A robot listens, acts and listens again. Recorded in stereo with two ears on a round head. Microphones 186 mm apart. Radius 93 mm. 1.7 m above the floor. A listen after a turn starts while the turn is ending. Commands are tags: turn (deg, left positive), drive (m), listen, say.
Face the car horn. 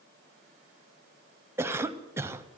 <listen/>
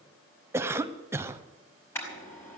<turn deg="30"/>
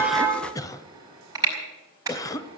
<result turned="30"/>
<turn deg="-15"/>
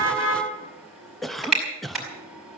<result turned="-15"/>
<say>Facing the car horn.</say>